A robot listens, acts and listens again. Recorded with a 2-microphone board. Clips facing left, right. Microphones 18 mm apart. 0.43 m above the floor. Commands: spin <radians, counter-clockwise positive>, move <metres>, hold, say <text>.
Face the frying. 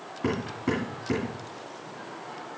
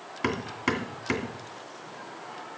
hold
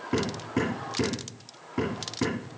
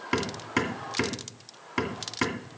hold
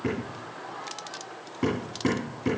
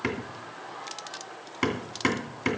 say I can't make out frying, only hammering.